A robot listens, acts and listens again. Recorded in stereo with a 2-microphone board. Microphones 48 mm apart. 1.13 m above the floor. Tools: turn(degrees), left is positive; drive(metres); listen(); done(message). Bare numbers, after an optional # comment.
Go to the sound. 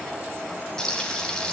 turn(30)
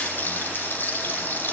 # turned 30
# So it is at 135° left.
turn(135)
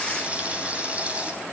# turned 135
# The frying is now 30° right.
turn(-30)
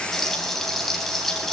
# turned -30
drive(1.0)
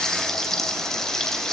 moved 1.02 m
# The frying is now 10° left.
turn(10)
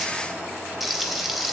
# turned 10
drive(1.0)
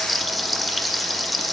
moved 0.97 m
drive(1.0)
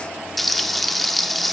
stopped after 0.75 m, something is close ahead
done("I am next to the frying.")